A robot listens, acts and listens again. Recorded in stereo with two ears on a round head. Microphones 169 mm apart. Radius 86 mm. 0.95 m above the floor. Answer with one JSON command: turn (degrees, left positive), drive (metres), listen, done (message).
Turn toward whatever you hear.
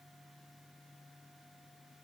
{"listen": true}
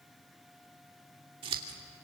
{"turn": -30}
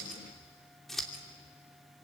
{"done": "Facing the scissors."}